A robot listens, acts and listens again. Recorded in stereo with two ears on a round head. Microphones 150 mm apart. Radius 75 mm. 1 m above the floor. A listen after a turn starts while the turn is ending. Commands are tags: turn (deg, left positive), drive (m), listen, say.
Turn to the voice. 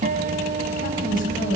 <turn deg="55"/>
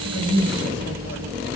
<listen/>
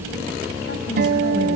<listen/>
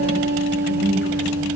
<say>I heard a woman speaking, but can't make it out now. It was about straight ahead or 70° left.</say>